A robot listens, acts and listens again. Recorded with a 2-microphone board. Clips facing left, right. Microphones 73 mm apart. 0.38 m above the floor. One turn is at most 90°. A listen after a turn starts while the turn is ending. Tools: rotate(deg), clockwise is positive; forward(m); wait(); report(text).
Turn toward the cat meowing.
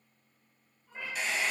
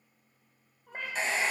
rotate(65)
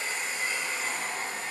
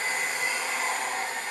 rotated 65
wait()
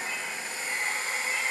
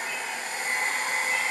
wait()
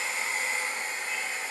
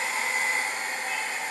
report("I heard a cat meowing, but can't make it out now. It was about straight ahead or 50° right.")